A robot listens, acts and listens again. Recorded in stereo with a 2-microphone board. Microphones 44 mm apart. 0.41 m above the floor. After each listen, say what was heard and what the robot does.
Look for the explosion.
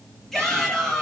Keep listening.
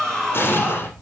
The explosion: about 55° left or 125° left. Turn 55° left.
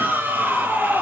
Keep listening.
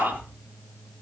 I heard an explosion, but can't make it out now. It was about straight ahead or 70° left.